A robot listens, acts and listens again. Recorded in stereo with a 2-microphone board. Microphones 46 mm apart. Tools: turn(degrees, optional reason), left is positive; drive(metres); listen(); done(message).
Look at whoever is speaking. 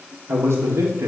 turn(degrees=-70, reason="The man speaking: about 70° right or 110° right.")
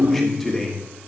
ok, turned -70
turn(degrees=10, reason="So it is at 10° left.")
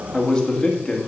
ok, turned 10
turn(degrees=20, reason="The man speaking is now 20° left.")
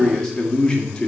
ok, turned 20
turn(degrees=20, reason="The man speaking is now 20° left.")
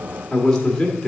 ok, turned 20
turn(degrees=15, reason="The man speaking is now 15° left.")
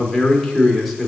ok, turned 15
done("Facing the man speaking, 1 to 2 m away.")